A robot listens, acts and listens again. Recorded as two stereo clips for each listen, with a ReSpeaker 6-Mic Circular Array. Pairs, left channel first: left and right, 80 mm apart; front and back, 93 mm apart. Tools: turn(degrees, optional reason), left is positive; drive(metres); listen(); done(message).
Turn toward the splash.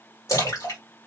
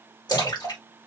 turn(degrees=45, reason="The splash: 45° left.")
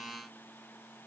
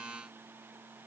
done("I heard a splash from this way, but can't make it out now.")